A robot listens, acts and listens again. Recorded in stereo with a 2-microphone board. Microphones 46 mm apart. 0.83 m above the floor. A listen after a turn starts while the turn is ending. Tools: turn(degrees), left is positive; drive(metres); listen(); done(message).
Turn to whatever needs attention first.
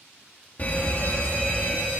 turn(degrees=35)
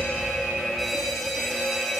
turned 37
done("Found it: a fire alarm, straight ahead, 2 to 4 m away.")